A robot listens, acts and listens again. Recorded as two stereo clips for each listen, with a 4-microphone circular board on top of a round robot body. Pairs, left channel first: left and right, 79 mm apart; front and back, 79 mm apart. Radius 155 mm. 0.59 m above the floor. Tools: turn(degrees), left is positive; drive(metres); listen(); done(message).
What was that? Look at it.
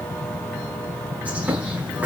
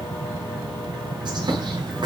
turn(degrees=-160)
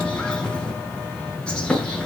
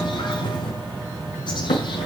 turn(degrees=15)
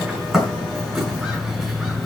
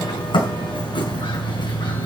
done("Facing the bird.")